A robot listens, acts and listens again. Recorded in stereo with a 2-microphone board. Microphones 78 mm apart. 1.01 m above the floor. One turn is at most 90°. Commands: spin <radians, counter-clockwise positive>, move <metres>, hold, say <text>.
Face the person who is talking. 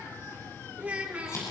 spin -0.35
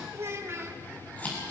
spin -1.57
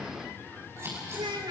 spin -1.48
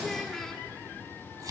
say Facing the child speaking, 1 to 2 m away.